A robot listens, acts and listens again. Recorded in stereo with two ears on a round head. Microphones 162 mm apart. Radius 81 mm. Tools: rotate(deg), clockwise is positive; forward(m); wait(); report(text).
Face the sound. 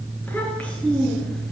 rotate(-30)
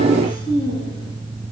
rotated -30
rotate(-150)
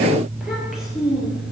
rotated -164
report("Found it: a child speaking, straight ahead, over 4 m away.")